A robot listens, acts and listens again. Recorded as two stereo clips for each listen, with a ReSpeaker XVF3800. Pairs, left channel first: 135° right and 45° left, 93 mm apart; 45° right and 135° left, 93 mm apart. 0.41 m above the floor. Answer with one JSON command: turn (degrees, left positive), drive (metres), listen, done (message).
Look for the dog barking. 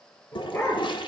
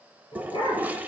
{"turn": -75}
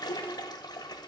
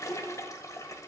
{"listen": true}
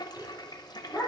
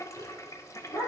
{"turn": -30}
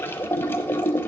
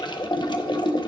{"listen": true}
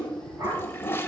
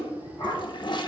{"turn": -10}
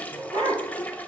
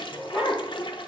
{"done": "Found it: a dog barking, straight ahead, over 4 m away."}